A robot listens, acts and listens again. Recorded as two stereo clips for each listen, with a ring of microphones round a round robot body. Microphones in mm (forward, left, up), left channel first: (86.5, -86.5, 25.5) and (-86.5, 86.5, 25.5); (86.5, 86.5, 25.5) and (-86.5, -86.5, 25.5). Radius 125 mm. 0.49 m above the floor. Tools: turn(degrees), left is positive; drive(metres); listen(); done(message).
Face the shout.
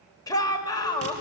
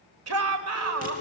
turn(degrees=-120)
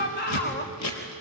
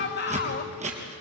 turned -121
done("Facing the shout, 1 to 2 m away.")